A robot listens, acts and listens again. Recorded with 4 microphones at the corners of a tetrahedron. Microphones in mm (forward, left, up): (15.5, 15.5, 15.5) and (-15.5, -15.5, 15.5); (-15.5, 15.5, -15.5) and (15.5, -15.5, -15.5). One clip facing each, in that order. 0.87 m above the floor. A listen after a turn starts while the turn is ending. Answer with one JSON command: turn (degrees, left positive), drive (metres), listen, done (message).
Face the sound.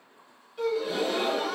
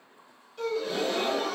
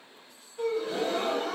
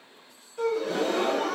{"turn": -35}
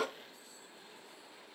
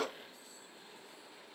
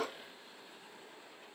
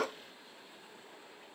{"done": "I heard a gasp from this way, but can't make it out now."}